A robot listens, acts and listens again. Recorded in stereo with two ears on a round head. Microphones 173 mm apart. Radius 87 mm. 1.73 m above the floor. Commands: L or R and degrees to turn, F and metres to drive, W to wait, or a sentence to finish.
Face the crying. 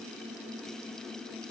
W
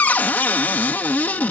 W
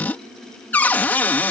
I can't make out crying to turn to.